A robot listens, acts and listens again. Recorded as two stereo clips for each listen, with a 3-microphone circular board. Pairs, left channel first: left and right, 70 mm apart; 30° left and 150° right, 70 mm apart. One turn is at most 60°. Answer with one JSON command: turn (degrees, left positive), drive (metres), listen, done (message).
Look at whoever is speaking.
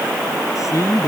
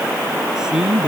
{"turn": 60}
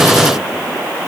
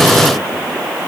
{"turn": 60}
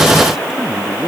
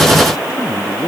{"done": "Facing the man speaking."}